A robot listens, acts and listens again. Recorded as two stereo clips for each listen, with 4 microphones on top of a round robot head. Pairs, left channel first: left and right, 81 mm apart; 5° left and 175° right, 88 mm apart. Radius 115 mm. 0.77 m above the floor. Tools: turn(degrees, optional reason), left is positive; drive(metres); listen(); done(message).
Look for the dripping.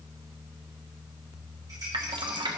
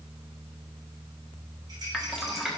turn(degrees=-90, reason="The dripping: 90° right.")
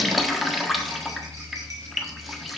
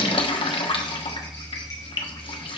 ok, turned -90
done("Facing the dripping.")